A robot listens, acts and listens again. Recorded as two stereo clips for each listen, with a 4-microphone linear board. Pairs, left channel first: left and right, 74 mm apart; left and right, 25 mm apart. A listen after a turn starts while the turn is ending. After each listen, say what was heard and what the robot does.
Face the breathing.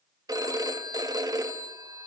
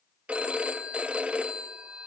Keep listening.
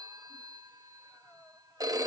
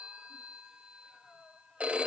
The breathing: about 20° left or 160° left. Turn 20° left.
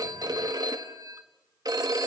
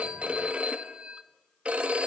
Keep listening.
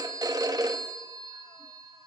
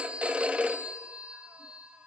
Keep listening.
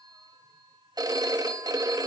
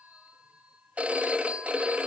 I heard breathing, but can't make it out now. It was about straight ahead or 140° left.